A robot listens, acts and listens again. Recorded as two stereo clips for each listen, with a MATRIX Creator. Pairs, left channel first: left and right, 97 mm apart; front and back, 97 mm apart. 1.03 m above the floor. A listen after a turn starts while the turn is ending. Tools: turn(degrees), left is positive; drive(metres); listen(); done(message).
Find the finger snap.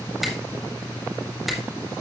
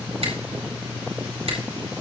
turn(degrees=180)
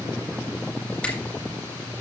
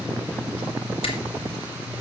turn(degrees=10)
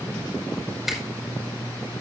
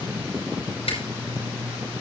done("Facing the finger snap, over 4 m away.")